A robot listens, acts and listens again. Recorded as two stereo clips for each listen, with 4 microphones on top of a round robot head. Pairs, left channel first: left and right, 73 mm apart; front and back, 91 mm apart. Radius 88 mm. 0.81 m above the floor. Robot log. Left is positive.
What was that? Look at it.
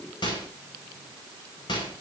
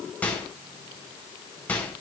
note: The microwave: 75° left.
cmd yaw +75
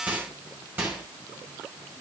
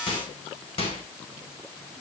note: The microwave is now 20° right.
cmd yaw -20
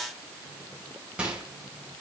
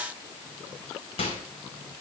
note: The microwave is now 10° right.
cmd yaw -10
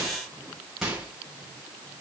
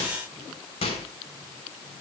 end: Found it: a microwave, straight ahead, over 4 m away.